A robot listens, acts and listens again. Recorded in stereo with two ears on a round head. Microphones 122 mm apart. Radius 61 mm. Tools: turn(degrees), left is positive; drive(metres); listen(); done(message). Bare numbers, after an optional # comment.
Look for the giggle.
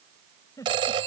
# The giggle: about 25° left or 155° left.
turn(25)
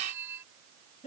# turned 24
# So it is at 130° left.
turn(130)
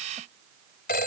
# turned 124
listen()
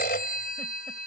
listen()
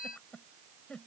done("Facing the giggle.")